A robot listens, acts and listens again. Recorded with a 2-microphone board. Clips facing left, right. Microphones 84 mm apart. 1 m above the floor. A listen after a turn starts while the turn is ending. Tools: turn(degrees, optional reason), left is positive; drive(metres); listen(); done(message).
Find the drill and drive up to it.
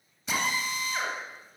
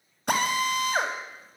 turn(degrees=-60, reason="The drill: about 60° right or 120° right.")
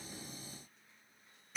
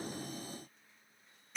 drive(metres=1.0)
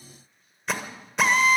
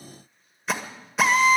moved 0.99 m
drive(metres=1.0)
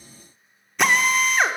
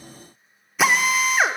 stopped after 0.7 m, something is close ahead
done("I am next to the drill.")